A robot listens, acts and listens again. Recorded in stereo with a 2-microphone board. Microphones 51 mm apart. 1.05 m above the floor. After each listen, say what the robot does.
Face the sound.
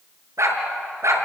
Turn 90° right.
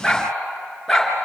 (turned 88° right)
Found it: a dog barking, straight ahead.